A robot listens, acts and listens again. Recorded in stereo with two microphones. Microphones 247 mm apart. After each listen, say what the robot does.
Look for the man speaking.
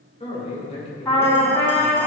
Turn 25° left.
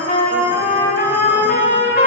Keep listening.
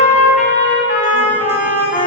Keep listening.
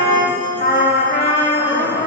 I heard a man speaking, but can't make it out now. It was about straight ahead or 130° left.